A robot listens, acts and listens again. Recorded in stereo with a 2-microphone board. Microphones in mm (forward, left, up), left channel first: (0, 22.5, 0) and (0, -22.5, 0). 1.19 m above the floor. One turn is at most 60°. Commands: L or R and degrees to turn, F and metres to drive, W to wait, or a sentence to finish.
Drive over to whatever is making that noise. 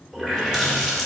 R30
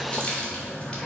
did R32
L20
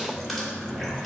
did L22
F1.0
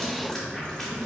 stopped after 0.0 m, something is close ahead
Blocked. The running tap is further on, straight ahead.